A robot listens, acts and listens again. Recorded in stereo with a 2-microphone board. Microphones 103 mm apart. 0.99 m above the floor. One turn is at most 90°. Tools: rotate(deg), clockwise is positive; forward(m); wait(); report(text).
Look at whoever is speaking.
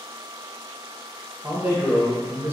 rotate(20)
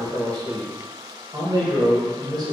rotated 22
rotate(90)
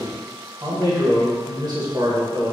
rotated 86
rotate(50)
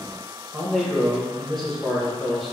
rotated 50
report("Facing the man speaking.")